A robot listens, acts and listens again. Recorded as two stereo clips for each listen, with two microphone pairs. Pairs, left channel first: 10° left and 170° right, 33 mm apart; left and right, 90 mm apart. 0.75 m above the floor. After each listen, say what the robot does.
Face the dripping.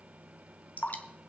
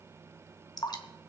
Turn 50° left.
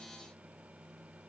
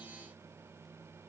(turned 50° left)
Keep listening.
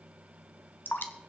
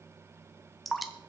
Found it: dripping, straight ahead, 1 to 2 m away.